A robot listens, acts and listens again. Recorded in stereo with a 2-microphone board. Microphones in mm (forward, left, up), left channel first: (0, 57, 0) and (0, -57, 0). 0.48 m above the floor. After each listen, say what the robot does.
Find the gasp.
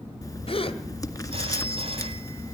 Turn 55° left.
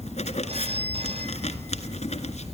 Keep listening.
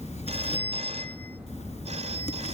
I heard a gasp, but can't make it out now. It was about straight ahead or 70° left.